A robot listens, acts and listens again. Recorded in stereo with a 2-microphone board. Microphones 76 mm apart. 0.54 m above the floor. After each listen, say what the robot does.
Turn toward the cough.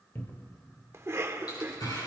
Turn 40° right.
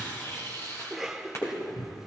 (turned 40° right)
Found it: a cough, straight ahead.